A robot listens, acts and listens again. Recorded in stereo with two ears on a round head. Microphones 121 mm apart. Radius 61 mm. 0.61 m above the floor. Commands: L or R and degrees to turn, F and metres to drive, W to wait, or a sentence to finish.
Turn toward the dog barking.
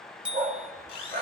R90
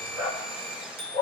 R15
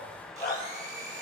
Found it: a dog barking, straight ahead, 2 to 4 m away.